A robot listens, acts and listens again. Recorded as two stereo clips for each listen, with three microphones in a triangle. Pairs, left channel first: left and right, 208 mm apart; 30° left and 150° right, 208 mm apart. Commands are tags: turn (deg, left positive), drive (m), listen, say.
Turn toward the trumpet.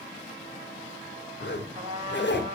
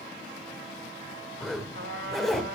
<turn deg="-150"/>
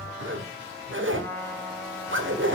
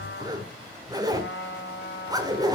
<turn deg="10"/>
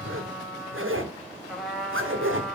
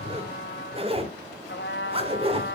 <say>Facing the trumpet, 2 to 4 m away.</say>